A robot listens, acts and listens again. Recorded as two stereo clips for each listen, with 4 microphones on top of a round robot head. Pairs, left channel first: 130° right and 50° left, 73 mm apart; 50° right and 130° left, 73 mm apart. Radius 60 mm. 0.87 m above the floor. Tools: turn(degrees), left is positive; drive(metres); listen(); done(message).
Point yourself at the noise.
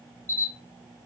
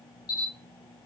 turn(degrees=-70)
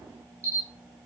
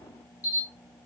done("Found it: a camera shutter, straight ahead, 1 to 2 m away.")